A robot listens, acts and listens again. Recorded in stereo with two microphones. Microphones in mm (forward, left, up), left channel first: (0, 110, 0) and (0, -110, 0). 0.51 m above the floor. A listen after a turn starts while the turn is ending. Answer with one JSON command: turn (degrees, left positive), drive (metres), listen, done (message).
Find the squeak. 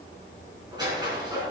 {"turn": -20}
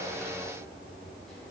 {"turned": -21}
{"listen": true}
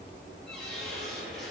{"done": "Found it: a squeak, straight ahead, over 4 m away."}